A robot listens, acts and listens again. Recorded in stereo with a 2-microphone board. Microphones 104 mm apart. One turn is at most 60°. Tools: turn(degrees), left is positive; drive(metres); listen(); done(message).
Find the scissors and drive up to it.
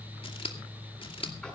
turn(degrees=60)
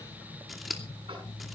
drive(metres=1.0)
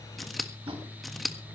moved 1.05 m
drive(metres=1.0)
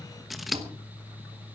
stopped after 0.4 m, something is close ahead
done("Arrived at the scissors, straight ahead.")